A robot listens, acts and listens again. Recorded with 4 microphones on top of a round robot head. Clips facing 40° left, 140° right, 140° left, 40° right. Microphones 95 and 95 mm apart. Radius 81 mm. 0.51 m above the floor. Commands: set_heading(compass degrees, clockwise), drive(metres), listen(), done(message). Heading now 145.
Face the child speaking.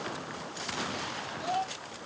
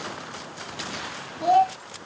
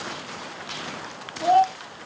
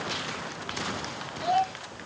set_heading(315)
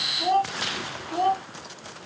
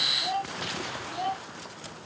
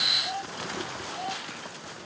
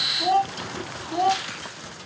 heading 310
set_heading(320)
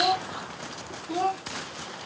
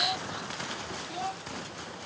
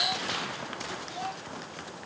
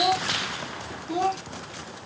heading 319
done("Facing the child speaking.")